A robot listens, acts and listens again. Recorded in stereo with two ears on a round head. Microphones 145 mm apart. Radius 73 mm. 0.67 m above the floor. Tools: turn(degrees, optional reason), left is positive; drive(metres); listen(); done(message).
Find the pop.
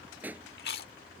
turn(degrees=-30)
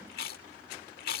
listen()
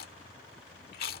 done("I heard a pop, but can't make it out now. It was about 20° left or 140° right.")